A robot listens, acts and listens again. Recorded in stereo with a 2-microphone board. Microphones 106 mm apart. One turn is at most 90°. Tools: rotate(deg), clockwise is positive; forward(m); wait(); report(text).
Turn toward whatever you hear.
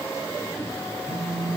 rotate(-45)
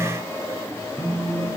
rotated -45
rotate(-10)
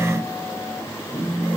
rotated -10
report("Found it: a phone buzzing, straight ahead, 1 to 2 m away.")